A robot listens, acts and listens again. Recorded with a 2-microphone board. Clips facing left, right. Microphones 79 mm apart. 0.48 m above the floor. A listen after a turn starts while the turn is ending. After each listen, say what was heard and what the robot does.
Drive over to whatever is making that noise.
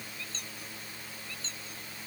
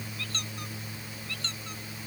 The squeak: about 75° right or 105° right. Turn 75° right.
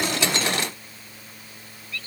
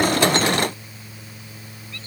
Keep listening.
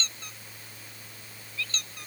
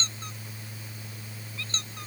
So it is at 30° right. Turn 30° right.
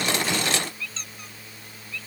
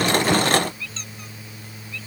Drive 1.0 m forward.
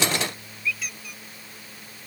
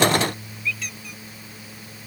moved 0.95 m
Drive 1.0 m forward.
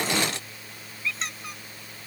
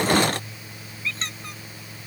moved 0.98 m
Drive 1.0 m forward.
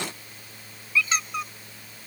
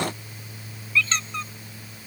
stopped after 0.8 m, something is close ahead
The squeak is now 15° left. Turn 15° left.
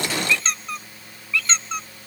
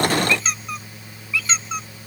Arrived at the squeak, straight ahead.